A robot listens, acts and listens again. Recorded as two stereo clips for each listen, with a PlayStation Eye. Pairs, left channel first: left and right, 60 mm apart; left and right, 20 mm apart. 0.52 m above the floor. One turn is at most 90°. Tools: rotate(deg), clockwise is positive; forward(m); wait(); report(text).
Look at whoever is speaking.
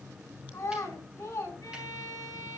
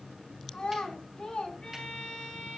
rotate(-65)
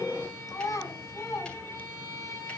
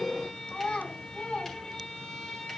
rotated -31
rotate(-85)
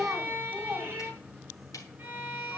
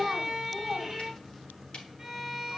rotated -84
report("Facing the child speaking, 2 to 4 m away.")